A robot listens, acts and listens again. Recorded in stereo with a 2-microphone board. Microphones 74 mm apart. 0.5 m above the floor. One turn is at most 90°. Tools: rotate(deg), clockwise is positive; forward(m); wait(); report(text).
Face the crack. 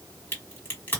rotate(-30)
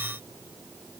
wait()
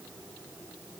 report("I heard a crack, but can't make it out now. It was about straight ahead or 120° left.")